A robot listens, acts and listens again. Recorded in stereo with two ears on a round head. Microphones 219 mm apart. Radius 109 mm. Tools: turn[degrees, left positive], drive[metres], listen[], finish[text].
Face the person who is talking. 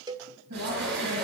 Thought: The woman speaking: about 75° right or 105° right.
Action: turn[-75]
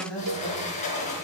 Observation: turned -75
Thought: So it is at 10° left.
Action: turn[10]
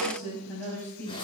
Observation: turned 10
Thought: The woman speaking is now 10° left.
Action: turn[10]
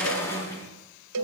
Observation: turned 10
Action: listen[]
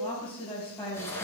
Thought: The woman speaking is now 10° left.
Action: turn[10]
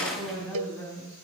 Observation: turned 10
Action: finish[Facing the woman speaking.]